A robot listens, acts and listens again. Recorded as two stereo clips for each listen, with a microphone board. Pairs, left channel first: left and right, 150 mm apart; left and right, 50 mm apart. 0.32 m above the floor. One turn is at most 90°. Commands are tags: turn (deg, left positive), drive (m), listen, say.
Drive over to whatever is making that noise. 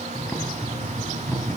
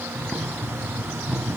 <turn deg="30"/>
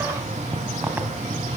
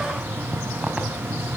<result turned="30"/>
<turn deg="-15"/>
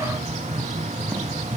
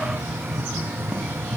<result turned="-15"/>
<drive m="1.0"/>
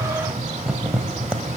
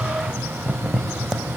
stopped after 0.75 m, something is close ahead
<turn deg="-10"/>
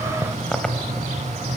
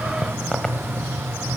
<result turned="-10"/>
<say>Arrived at the boiling, straight ahead.</say>